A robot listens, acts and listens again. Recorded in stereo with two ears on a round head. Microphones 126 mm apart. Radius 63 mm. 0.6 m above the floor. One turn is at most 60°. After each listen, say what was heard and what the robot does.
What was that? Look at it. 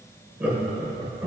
Turn 30° right.
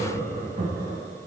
So it is at 135° right. Turn 60° right.
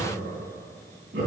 The laughter is now 80° right. Turn 60° right.
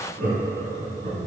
The laughter is now 40° right. Turn 40° right.
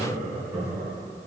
Found it: laughter, straight ahead, over 4 m away.